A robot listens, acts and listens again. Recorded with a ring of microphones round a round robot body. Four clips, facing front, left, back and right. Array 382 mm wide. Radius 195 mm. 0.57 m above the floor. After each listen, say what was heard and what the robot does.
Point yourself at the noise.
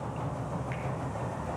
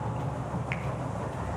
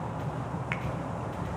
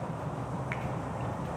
The finger snap: 170° left. Turn 170° left.
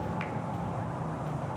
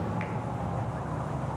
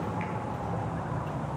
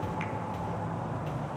The finger snap is now 25° right. Turn 25° right.
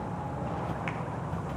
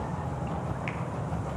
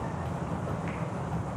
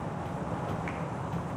Keep listening.
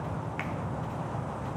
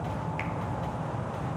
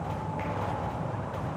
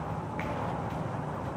The finger snap is now 10° left. Turn 10° left.
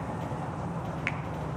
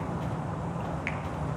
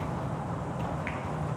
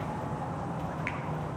Found it: a finger snap, straight ahead.